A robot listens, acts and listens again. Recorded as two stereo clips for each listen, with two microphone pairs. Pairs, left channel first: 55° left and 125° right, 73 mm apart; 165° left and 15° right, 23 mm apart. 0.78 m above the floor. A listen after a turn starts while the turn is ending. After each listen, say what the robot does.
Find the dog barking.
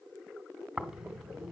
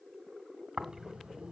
Keep listening.
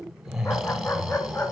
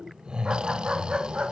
Facing the dog barking.